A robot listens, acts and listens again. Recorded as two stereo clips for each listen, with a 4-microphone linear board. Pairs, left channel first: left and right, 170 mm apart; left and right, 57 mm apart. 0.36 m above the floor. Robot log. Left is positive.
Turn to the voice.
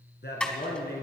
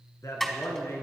cmd yaw +90
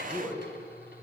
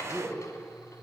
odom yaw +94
end: Found it: a man speaking, straight ahead, 2 to 4 m away.